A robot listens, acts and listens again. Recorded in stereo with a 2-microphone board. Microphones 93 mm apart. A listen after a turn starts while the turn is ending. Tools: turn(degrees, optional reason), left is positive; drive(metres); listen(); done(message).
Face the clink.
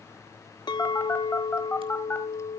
turn(degrees=50, reason="The clink: about 50° left or 130° left.")
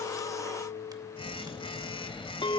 turn(degrees=75, reason="So it is at 75° left.")
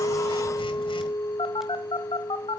turn(degrees=30, reason="The clink is now 30° left.")
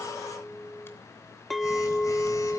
done("Found it: a clink, straight ahead, under 1 m away.")